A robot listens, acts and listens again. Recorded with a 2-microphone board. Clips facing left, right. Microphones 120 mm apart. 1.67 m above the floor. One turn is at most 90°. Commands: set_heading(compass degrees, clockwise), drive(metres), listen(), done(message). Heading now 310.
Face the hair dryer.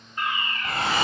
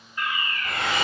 set_heading(280)
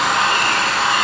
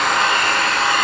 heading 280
done("Facing the hair dryer.")